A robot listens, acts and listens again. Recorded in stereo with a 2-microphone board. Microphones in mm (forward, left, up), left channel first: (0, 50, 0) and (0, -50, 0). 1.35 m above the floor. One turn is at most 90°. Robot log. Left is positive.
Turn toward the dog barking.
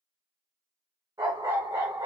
note: The dog barking: about 30° right or 150° right.
cmd yaw -30
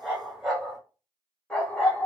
note: So it is at 20° left.
cmd yaw +20
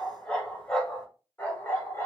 note: The dog barking is now 25° left.
cmd yaw +25
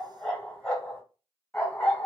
note: The dog barking is now 10° left.
cmd yaw +10
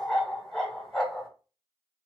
end: Facing the dog barking, 2 to 4 m away.